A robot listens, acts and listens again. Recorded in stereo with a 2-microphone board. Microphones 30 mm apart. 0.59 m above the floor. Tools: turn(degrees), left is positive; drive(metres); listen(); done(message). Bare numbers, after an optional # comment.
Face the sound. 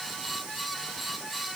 listen()
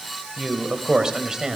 # The man speaking: about 20° right or 160° right.
turn(-20)
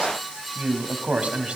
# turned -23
# So it is at 135° right.
turn(-135)
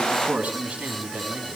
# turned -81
# The man speaking is now 50° right.
turn(-50)
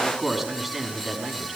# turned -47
done("Facing the man speaking, over 4 m away.")